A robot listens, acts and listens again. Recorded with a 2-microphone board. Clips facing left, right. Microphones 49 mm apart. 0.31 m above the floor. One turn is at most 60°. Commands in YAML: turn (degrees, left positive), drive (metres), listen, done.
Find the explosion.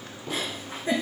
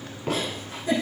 turn: -60
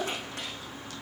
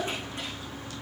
listen: true
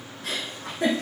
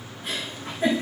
done: "I heard an explosion, but can't make it out now. It was about 10° right or 50° right."